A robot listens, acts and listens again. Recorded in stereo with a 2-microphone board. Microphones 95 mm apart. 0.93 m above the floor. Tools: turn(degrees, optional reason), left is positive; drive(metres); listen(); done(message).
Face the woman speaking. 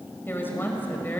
turn(degrees=20, reason="The woman speaking: about 20° left or 160° left.")
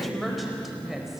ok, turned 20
done("Found it: a woman speaking, straight ahead.")